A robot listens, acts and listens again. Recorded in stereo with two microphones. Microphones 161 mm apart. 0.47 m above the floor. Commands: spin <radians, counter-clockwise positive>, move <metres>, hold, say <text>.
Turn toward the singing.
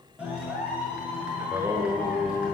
spin -0.52
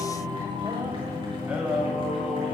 spin -0.52
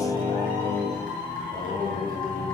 spin -2.79
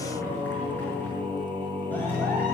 spin -0.52
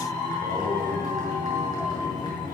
hold
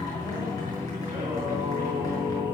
spin -0.26
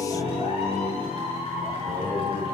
say Found it: singing, straight ahead, 2 to 4 m away.